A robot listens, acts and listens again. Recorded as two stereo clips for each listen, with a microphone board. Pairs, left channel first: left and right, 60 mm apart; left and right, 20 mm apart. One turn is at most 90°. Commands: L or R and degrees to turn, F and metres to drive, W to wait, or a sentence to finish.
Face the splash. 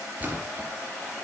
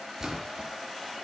R25
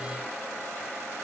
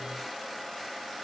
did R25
W
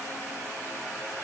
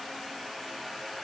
I heard a splash, but can't make it out now. It was about straight ahead or 130° right.